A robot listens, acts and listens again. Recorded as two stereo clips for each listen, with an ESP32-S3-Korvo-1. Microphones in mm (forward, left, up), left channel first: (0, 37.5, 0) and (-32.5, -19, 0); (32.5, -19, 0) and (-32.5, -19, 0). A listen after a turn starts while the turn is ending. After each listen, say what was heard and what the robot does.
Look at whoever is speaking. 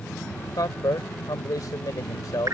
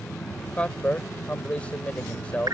The man speaking: 70° left. Turn 70° left.
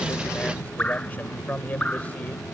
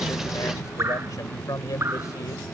Facing the man speaking.